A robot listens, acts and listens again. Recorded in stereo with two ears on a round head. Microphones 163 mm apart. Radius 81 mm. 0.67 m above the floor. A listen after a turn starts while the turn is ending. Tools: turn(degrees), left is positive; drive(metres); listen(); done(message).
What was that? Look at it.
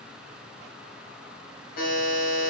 turn(degrees=60)
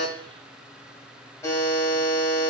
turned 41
turn(degrees=15)
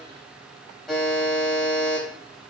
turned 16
done("Found it: a buzzer, straight ahead.")